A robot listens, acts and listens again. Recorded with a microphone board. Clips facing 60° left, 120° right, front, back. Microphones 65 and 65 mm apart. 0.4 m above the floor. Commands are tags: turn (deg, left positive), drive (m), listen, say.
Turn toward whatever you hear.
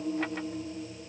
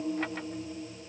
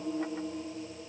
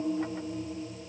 <listen/>
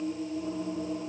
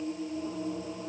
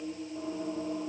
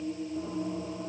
<listen/>
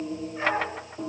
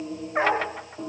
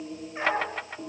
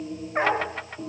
<turn deg="-140"/>
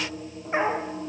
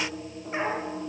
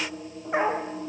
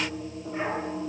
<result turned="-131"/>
<say>Facing the dog barking, over 4 m away.</say>